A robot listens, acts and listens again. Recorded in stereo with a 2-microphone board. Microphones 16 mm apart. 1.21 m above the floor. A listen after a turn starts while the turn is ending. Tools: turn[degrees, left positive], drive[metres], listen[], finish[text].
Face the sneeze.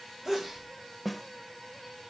Thought: The sneeze: about 20° right or 160° right.
Action: turn[-20]
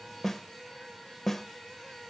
Action: listen[]
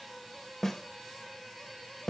Action: finish[I heard a sneeze, but can't make it out now. It was about straight ahead or 140° right.]